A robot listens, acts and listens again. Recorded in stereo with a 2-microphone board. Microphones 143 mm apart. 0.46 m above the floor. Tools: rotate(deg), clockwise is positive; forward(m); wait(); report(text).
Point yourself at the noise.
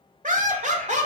rotate(50)
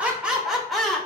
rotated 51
report("Found it: laughter, straight ahead, 1 to 2 m away.")